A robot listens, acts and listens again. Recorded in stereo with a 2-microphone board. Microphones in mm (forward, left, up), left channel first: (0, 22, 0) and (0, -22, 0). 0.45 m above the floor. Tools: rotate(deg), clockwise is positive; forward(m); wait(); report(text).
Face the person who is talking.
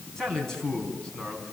rotate(-30)
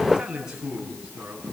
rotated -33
rotate(20)
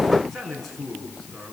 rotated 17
report("Facing the man speaking.")